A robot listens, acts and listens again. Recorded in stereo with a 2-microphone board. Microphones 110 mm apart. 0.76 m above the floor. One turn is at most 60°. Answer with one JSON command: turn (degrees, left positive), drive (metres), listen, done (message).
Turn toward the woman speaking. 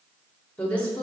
{"turn": 30}
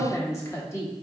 {"turn": 60}
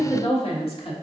{"turn": 60}
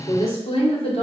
{"turn": 60}
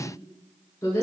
{"turn": 25}
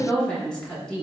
{"done": "Found it: a woman speaking, straight ahead."}